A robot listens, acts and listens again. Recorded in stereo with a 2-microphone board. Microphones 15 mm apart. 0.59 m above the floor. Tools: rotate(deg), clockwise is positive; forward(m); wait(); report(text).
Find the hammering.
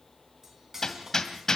rotate(-35)
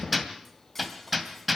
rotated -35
report("Found it: hammering, straight ahead.")